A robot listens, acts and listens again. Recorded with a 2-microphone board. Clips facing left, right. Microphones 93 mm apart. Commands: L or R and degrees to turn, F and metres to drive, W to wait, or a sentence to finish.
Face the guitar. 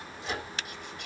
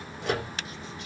W
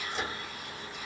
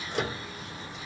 W
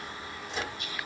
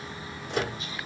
I can't make out a guitar, only a microwave.